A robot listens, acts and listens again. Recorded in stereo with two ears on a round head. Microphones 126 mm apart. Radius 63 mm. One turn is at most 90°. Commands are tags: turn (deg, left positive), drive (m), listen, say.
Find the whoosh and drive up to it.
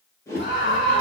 <turn deg="20"/>
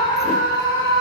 <listen/>
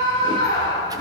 <listen/>
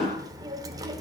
<drive m="1.0"/>
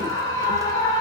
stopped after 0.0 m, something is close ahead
<listen/>
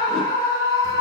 <listen/>
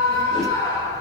<say>I heard a whoosh from this way, but can't make it out now. I did not reach it.</say>